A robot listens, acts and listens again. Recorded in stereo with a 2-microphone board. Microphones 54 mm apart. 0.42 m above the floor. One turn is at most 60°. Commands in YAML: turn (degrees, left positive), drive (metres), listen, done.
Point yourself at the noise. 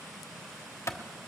turn: 55
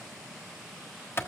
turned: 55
turn: 55
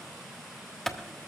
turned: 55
turn: 10
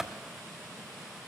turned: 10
done: "Facing the clap, 1 to 2 m away."